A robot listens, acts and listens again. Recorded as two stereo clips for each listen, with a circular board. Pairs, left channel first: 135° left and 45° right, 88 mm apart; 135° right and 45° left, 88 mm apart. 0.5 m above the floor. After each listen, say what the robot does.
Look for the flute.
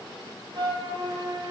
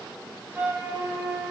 Turn 20° right.
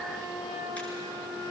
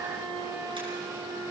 Found it: a flute, straight ahead, over 4 m away.